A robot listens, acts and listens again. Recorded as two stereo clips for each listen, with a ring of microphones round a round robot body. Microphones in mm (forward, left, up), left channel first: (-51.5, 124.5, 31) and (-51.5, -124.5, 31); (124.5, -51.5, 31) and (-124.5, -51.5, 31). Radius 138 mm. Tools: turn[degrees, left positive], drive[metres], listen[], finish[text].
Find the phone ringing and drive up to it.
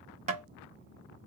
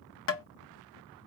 Action: listen[]
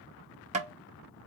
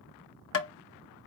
Action: listen[]
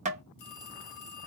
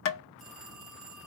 Thought: The phone ringing: 90° left.
Action: turn[90]
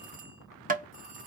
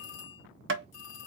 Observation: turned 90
Thought: The phone ringing is now 25° right.
Action: turn[-25]
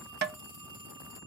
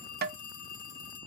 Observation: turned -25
Thought: The phone ringing is now 15° right.
Action: turn[-15]
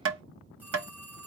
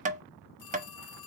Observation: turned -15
Action: drive[1.0]
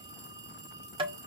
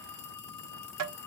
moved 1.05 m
Thought: The phone ringing is now 15° right.
Action: turn[-15]
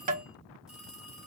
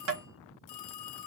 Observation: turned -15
Action: drive[1.0]
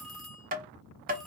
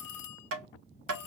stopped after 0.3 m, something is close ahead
Action: finish[I am next to the phone ringing.]